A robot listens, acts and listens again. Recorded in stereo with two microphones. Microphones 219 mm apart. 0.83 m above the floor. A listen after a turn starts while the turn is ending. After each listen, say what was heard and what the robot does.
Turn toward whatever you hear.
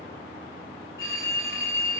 The phone ringing: about 60° left or 120° left. Turn 60° left.
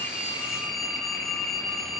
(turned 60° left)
Found it: a phone ringing, straight ahead, 2 to 4 m away.